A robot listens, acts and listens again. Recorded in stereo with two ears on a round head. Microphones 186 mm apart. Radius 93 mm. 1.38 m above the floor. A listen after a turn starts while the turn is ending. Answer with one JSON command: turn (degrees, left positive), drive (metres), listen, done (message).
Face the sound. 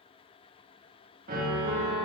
{"turn": -45}
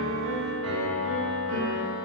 {"turn": -90}
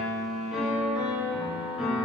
{"done": "Facing the piano."}